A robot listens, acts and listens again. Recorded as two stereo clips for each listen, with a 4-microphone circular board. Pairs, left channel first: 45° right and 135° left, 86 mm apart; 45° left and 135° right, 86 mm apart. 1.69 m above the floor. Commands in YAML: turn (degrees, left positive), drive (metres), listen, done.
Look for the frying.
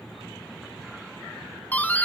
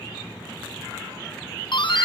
listen: true
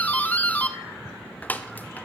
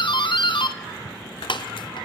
listen: true
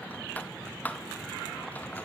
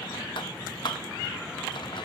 done: "I can't make out frying, only a doorbell."